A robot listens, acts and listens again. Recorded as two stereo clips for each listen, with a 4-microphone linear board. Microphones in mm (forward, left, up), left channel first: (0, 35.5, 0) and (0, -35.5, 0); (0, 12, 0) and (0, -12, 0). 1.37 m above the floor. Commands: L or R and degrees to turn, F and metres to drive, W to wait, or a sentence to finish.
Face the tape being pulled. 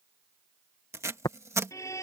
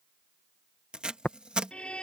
R45
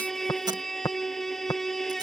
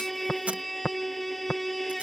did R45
R90
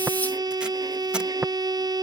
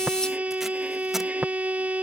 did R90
W
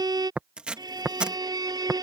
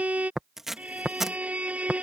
R15
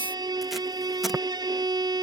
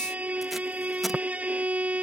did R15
W
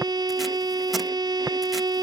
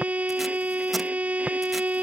W
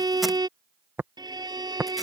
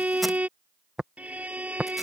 Facing where the tape being pulled came from. I can't hear it now.